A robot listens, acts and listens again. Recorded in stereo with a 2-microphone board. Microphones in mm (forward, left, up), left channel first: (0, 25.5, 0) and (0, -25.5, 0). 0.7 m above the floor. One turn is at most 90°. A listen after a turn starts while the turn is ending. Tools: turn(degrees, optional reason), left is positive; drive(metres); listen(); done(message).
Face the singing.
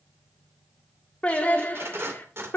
turn(degrees=45, reason="The singing: about 45° left or 135° left.")
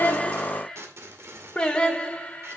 turn(degrees=30, reason="So it is at 30° left.")
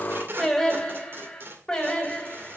turn(degrees=20, reason="The singing is now 20° left.")
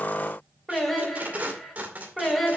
done("Found it: singing, straight ahead.")